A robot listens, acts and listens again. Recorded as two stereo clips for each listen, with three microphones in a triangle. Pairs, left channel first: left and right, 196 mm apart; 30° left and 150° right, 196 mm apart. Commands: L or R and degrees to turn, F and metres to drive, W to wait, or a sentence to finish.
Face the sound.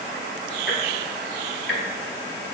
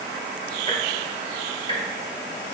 L90
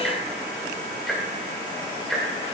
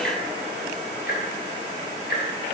Facing the ticking, 1 to 2 m away.